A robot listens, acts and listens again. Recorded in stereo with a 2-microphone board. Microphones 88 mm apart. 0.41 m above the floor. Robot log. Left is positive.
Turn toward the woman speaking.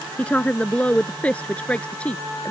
cmd yaw +30
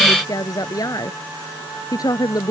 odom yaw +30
note: So it is at 135° left.
cmd yaw +135
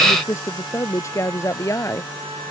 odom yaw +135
note: The woman speaking is now 35° left.
cmd yaw +35
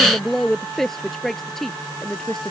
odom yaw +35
end: Found it: a woman speaking, straight ahead.